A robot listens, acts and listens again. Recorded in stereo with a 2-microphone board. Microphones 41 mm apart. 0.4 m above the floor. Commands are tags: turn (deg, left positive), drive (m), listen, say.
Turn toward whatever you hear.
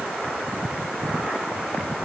<listen/>
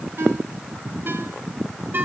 <turn deg="-55"/>
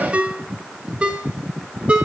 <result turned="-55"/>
<turn deg="-35"/>
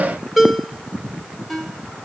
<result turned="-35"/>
<say>Found it: a ringtone, straight ahead, 1 to 2 m away.</say>